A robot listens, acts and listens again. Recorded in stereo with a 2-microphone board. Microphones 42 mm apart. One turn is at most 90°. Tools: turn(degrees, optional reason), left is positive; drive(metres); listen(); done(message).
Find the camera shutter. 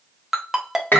listen()
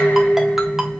listen()
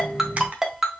turn(degrees=-30, reason="The camera shutter: about 30° right or 150° right.")
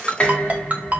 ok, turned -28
listen()
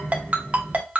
listen()
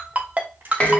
done("I heard a camera shutter, but can't make it out now. It was about 5° right or 120° right.")